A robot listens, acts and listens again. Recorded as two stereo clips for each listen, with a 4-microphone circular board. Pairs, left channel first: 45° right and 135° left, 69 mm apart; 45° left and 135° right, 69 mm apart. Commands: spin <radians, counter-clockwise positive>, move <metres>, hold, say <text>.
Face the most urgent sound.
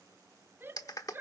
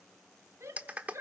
spin -3.05
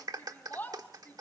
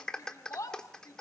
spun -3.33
spin 0.26
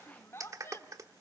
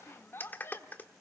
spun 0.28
say Facing the shout.